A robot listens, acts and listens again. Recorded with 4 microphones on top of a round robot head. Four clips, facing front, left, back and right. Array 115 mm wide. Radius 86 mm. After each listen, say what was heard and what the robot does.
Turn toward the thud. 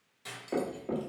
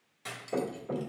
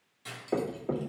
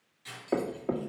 The thud: 100° right. Turn 100° right.
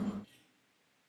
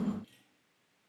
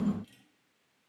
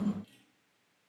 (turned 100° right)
I heard a thud from this way, but can't make it out now.